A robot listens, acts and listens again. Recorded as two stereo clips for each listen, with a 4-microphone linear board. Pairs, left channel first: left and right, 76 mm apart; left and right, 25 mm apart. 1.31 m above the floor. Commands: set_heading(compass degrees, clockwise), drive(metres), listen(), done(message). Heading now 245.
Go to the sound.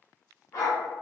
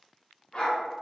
set_heading(190)
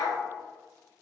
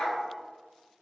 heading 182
set_heading(122)
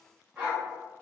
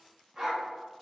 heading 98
set_heading(123)
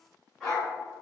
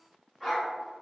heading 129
drive(1.0)
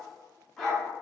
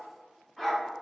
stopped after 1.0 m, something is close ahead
done("Arrived at the dog barking, straight ahead.")